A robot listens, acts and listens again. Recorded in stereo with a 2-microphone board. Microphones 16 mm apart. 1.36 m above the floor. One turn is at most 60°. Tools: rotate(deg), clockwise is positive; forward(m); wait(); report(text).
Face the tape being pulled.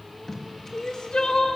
rotate(-30)
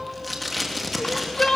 report("Facing the tape being pulled.")